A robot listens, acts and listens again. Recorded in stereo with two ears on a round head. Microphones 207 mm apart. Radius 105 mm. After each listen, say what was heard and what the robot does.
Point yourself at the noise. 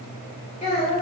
The child speaking: about 25° left or 155° left. Turn 25° left.
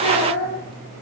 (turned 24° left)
The child speaking: about 35° left or 145° left. Turn 35° left.
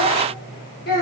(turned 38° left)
So it is at 140° left. Turn 140° left.
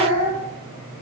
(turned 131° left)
The child speaking is now 25° left. Turn 25° left.
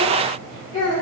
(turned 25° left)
The child speaking is now 20° left. Turn 20° left.
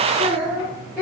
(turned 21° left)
Found it: a child speaking, straight ahead.